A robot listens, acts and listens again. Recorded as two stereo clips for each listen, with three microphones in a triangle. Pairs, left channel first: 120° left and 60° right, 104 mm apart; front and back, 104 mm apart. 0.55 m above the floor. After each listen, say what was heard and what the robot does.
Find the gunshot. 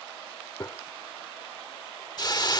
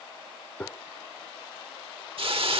The gunshot: 70° left. Turn 70° left.
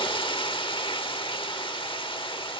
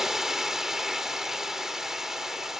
Facing where the gunshot came from. I can't hear it now.